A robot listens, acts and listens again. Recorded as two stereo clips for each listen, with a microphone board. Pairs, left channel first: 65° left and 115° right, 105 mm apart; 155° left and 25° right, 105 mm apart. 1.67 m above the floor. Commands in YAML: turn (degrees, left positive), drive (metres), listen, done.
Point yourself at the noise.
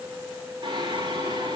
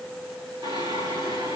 turn: -70
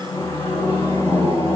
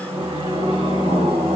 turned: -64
done: "Found it: singing, straight ahead."